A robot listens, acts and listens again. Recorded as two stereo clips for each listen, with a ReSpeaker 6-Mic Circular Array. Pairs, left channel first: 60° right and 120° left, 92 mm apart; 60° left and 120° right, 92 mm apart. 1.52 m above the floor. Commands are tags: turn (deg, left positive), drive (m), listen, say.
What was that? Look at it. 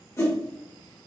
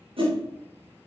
<turn deg="-120"/>
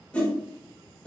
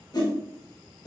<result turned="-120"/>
<turn deg="20"/>
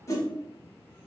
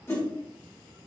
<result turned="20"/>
<say>Found it: a whoosh, straight ahead, 1 to 2 m away.</say>